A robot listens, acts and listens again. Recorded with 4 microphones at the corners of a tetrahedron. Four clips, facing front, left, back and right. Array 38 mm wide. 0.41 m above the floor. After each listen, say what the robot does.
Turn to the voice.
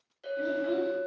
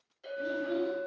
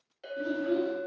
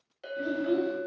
Turn 60° right.
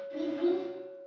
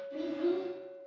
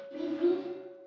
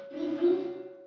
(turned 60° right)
Turn 15° right.
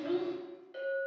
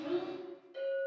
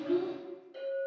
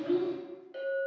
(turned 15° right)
Found it: a child speaking, straight ahead, 1 to 2 m away.